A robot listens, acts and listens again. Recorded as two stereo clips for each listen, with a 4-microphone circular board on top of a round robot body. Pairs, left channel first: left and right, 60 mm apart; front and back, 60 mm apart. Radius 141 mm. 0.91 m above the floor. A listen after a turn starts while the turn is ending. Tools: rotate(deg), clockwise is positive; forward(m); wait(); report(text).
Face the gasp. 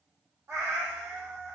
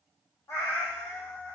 wait()
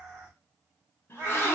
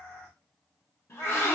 rotate(-45)
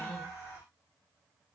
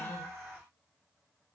report("Facing where the gasp came from. I can't hear it now.")